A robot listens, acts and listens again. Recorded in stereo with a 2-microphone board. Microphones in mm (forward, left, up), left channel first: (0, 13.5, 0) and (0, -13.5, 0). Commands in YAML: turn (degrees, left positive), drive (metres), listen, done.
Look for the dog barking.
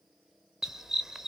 turn: -20
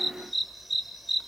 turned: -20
done: "Found it: a dog barking, straight ahead."